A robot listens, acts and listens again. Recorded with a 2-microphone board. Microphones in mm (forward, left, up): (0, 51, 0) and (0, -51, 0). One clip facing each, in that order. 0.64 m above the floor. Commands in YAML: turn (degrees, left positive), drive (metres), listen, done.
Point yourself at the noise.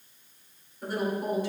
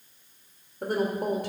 turn: -60
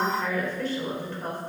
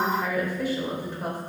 turn: -15
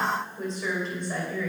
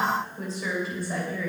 done: "Found it: a woman speaking, straight ahead, 2 to 4 m away."